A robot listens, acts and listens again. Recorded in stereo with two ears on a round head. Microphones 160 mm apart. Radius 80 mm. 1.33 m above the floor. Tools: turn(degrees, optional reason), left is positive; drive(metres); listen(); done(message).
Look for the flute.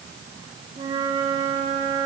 turn(degrees=-30, reason="The flute: about 30° right or 150° right.")
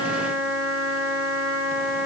done("Facing the flute, 2 to 4 m away.")